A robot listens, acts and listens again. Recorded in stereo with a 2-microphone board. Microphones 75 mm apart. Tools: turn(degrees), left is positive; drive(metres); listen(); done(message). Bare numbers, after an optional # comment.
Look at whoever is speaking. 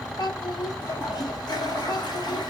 # The child speaking: about 75° left or 105° left.
turn(75)
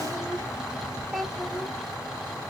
done("Found it: a child speaking, straight ahead.")